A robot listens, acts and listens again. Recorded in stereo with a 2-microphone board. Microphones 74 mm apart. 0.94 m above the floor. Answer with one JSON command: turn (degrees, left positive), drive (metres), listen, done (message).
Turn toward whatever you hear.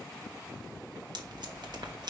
{"turn": -65}
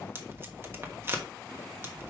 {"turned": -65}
{"turn": -35}
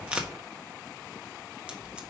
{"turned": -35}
{"turn": -15}
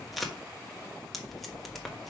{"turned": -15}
{"done": "Found it: tape being pulled, straight ahead."}